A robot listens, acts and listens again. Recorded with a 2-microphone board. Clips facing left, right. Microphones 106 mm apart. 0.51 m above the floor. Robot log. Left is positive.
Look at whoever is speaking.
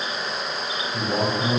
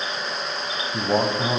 note: The man speaking: about 35° right or 145° right.
cmd yaw -35
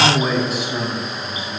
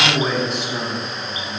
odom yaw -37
end: Facing the man speaking, over 4 m away.